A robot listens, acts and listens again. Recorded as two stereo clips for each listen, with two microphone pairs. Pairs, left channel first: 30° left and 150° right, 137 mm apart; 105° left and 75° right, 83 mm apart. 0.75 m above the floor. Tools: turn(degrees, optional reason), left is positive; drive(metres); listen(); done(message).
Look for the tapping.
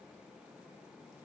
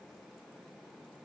listen()
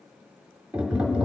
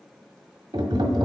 turn(degrees=-70, reason="The tapping: 70° right.")
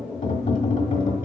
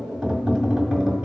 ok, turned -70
turn(degrees=15, reason="The tapping is now 15° left.")
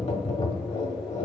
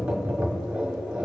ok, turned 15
done("Facing the tapping.")